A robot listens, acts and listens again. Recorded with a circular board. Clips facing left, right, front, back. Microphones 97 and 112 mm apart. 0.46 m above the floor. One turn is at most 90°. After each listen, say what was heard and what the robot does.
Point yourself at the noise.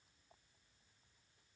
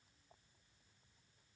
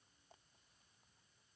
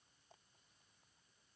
Keep listening.
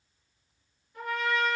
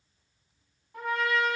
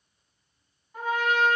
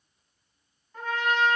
The trumpet: 80° right. Turn 80° right.
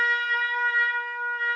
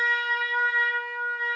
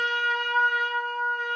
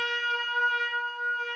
The trumpet is now 15° right. Turn 15° right.
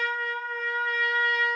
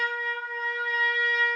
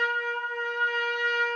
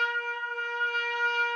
Facing the trumpet.